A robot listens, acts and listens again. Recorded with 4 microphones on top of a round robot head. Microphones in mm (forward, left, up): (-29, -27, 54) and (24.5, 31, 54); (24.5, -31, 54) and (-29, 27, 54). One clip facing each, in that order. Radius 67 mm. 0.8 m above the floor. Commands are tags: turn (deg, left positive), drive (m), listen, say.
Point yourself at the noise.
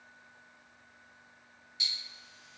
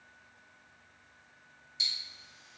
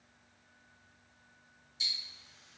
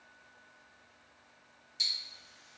<turn deg="110"/>
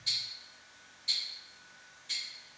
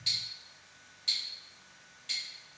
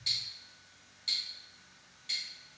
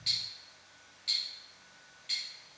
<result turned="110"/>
<turn deg="20"/>
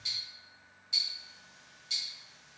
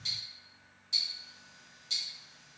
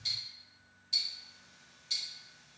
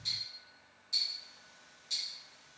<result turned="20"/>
<say>Facing the ticking, 1 to 2 m away.</say>